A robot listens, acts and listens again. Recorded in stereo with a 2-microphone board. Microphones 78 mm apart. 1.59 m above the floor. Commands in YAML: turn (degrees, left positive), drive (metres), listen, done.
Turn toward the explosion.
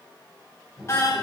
turn: -20
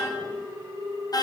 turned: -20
listen: true
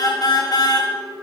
done: "I heard an explosion, but can't make it out now. It was about straight ahead or 140° right."